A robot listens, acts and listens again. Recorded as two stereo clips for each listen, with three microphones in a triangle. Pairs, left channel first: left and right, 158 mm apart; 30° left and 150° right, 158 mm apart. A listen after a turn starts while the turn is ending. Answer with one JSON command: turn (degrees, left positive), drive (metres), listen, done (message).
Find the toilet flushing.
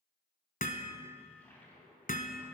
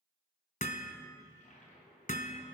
{"turn": 15}
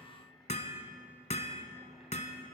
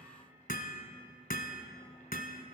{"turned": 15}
{"listen": true}
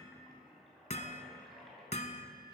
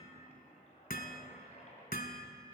{"done": "Facing the toilet flushing, 2 to 4 m away."}